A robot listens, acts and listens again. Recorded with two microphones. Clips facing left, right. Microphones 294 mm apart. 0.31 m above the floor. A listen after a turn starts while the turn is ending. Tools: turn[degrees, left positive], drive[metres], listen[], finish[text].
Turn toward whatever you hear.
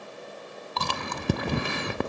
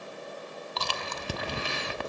Thought: The chewing: about 60° left or 120° left.
Action: turn[60]
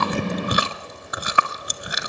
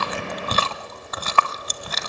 Thought: So it is at 15° left.
Action: turn[15]
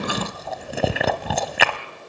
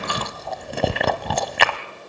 Action: finish[Facing the chewing, 1 to 2 m away.]